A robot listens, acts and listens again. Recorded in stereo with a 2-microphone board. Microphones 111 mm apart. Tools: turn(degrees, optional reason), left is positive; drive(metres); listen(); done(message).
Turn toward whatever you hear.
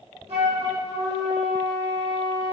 turn(degrees=-70, reason="The flute: about 70° right or 110° right.")
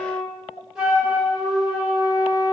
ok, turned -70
done("Found it: a flute, straight ahead.")